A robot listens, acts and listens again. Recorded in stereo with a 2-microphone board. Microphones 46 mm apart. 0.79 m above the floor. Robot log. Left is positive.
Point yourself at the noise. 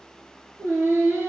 note: The singing: about 65° right or 115° right.
cmd yaw -65
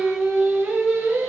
note: So it is at 55° right.
cmd yaw -55
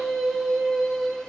end: Facing the singing, 2 to 4 m away.